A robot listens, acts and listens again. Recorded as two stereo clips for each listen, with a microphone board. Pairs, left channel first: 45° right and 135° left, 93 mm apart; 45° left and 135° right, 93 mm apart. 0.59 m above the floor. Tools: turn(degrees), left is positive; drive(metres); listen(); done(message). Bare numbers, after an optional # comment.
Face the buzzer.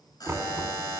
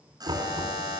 # The buzzer: 90° right.
turn(-90)
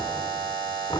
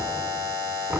done("Found it: a buzzer, straight ahead.")